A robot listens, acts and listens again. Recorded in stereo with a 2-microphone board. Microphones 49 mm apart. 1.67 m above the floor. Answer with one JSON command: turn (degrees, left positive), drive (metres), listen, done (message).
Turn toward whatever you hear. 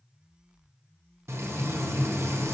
{"turn": -65}
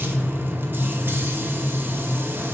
{"turn": -45}
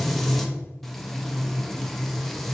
{"done": "Found it: frying, straight ahead, under 1 m away."}